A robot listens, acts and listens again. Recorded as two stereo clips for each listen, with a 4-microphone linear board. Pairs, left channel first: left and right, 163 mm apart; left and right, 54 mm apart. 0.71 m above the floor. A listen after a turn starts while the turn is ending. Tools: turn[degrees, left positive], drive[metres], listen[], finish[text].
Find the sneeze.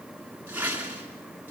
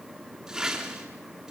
Action: listen[]
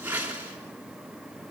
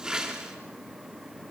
Action: listen[]
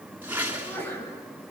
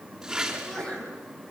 Action: turn[30]
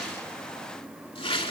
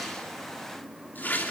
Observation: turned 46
Action: listen[]
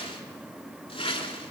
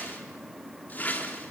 Action: finish[I heard a sneeze, but can't make it out now. It was about 35° right or 120° left.]